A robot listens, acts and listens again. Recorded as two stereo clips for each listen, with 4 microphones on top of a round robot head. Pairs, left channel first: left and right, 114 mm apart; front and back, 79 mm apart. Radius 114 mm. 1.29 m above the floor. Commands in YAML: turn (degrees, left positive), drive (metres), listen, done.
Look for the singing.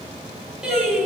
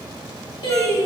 done: "Facing the singing, 2 to 4 m away."